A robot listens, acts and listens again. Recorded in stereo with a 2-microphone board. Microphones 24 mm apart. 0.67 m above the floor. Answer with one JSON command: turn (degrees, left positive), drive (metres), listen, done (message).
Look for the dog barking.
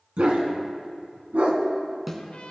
{"turn": -90}
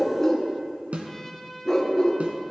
{"turn": 30}
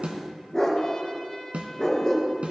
{"turn": 15}
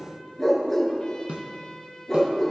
{"turn": 10}
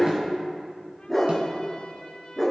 {"done": "Found it: a dog barking, straight ahead, 2 to 4 m away."}